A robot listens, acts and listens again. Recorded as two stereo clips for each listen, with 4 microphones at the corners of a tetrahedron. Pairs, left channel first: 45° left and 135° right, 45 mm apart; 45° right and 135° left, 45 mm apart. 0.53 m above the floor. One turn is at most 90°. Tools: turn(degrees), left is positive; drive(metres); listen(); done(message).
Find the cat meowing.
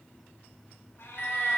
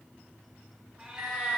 turn(degrees=70)
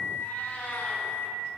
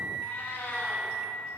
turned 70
turn(degrees=10)
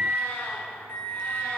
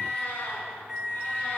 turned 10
listen()
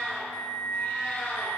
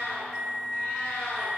turn(degrees=20)
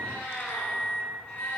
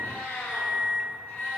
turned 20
done("Facing the cat meowing.")